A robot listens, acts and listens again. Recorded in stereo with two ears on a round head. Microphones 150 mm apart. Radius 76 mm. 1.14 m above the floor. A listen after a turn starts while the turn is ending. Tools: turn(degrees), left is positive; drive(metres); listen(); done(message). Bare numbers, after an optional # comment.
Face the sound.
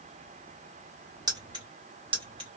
# The keys jangling: about 30° right or 150° right.
turn(-30)
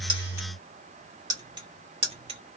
# The keys jangling: about 30° right or 150° right.
turn(-30)
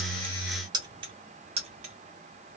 # The keys jangling: about 35° right or 145° right.
turn(-35)
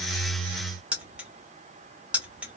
done("Found it: keys jangling, straight ahead, 1 to 2 m away.")